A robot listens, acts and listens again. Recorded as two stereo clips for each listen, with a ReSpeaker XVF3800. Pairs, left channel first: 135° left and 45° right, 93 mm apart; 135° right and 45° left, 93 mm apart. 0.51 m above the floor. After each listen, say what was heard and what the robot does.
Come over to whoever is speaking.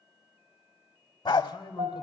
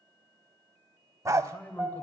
The man speaking: 155° left. Turn 155° left.
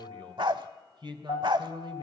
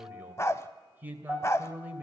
The man speaking is now 20° right. Turn 20° right.
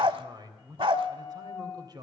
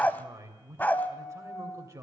The man speaking is now 10° right. Turn 10° right.
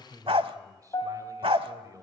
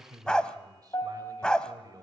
Drive 1.0 m forward.
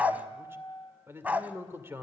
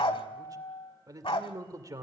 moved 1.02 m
The man speaking is now 10° left. Turn 10° left.
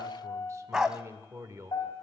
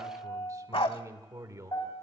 Drive 1.0 m forward.
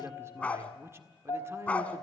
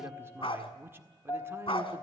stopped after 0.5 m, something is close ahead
Arrived at the man speaking, straight ahead.